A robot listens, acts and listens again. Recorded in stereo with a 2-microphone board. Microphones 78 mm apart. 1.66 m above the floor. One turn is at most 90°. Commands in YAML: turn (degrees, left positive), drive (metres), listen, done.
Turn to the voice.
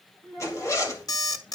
turn: 30
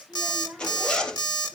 turn: -20
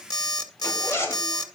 listen: true
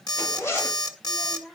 done: "Facing the child speaking."